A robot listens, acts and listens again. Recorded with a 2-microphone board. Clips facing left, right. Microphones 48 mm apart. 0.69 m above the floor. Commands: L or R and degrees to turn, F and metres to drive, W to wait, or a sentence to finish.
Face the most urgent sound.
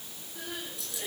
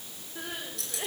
R35
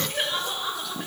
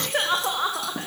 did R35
R110
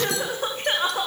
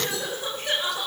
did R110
L40
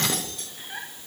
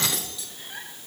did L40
L15
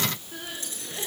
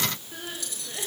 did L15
Found it: crying, straight ahead, over 4 m away.